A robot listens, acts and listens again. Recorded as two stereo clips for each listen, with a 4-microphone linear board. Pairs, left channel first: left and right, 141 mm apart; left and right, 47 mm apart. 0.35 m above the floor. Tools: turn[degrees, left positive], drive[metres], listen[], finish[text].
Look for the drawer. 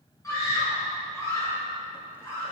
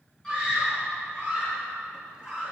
Action: listen[]
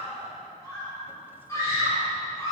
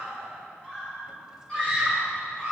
Action: listen[]
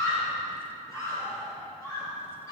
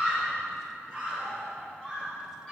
Action: finish[I can't make out a drawer to turn to.]